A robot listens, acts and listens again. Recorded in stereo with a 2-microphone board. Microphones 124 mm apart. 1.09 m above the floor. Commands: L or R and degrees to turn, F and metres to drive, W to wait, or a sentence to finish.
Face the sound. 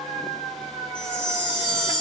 L40
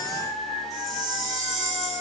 Found it: a chime, straight ahead.